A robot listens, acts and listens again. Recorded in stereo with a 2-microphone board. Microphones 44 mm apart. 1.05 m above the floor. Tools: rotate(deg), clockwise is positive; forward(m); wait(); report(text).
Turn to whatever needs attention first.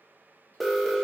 rotate(-30)
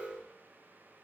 rotate(30)
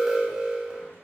rotate(15)
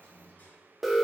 report("Facing the alarm.")